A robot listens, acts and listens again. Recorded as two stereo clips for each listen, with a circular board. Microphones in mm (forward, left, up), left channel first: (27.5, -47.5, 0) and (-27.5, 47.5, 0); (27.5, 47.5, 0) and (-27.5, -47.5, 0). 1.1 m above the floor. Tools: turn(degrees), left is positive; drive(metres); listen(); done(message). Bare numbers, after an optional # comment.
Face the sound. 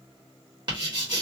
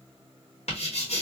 # The writing: 75° left.
turn(75)
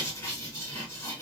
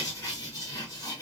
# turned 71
done("Found it: writing, straight ahead.")